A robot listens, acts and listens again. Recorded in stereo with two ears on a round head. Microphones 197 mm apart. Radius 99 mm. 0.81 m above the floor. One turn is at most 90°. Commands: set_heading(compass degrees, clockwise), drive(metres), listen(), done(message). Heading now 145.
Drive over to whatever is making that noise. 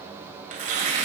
set_heading(180)
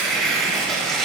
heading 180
drive(1.0)
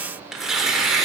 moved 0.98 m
drive(1.0)
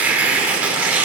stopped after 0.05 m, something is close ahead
done("I am next to the tearing paper.")